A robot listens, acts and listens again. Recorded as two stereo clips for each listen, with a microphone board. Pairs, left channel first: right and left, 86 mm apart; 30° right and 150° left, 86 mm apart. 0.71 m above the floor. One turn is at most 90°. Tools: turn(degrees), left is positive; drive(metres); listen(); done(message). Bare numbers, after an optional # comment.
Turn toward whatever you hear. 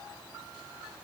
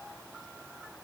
listen()
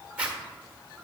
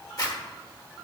# The zipper: 15° left.
turn(15)
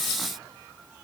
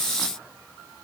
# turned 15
listen()
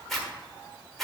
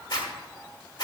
done("Facing the zipper, 1 to 2 m away.")